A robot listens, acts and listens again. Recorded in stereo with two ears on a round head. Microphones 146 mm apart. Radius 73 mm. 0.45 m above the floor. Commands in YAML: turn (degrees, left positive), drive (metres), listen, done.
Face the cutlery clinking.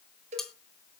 turn: 30
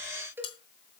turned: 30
turn: 145
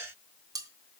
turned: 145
turn: -25
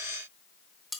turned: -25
done: "Found it: cutlery clinking, straight ahead."